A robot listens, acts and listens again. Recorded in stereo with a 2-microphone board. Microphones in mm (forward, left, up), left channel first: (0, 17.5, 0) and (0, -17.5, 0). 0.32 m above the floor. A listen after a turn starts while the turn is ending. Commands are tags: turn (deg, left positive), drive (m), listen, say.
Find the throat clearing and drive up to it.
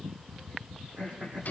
<turn deg="-45"/>
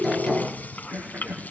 <turn deg="-95"/>
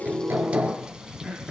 <drive m="1.0"/>
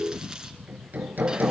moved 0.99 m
<listen/>
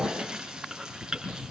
<listen/>
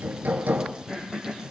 <turn deg="10"/>
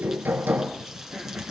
<listen/>
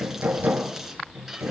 <listen/>
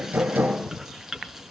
<say>Facing where the throat clearing came from. I can't hear it now. I did not reach it.</say>